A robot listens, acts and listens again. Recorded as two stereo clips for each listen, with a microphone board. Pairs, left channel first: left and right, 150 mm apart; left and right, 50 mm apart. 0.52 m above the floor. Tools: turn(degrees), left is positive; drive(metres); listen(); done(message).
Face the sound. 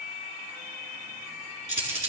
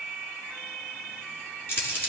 turn(degrees=50)
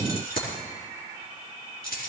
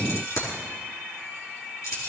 turn(degrees=80)
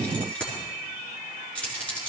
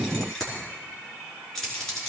turn(degrees=10)
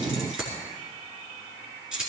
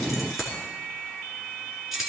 done("Facing the keys jangling, over 4 m away.")